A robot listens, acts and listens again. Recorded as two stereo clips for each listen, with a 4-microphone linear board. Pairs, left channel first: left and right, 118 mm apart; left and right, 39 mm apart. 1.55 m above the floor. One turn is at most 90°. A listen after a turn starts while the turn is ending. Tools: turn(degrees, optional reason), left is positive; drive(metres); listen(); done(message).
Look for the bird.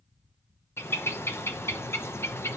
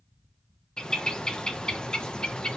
turn(degrees=25, reason="The bird: about 25° left or 155° left.")
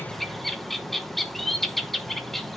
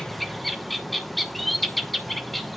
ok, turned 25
done("Facing the bird.")